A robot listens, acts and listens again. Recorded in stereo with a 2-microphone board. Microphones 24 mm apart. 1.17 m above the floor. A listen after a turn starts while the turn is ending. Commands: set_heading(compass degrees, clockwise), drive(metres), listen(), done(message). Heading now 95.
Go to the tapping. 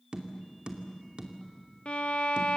set_heading(135)
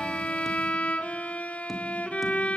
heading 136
listen()
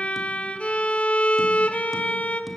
listen()
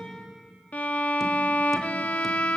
done("I heard tapping, but can't make it out now. It was about straight ahead or 100° right. I did not reach it.")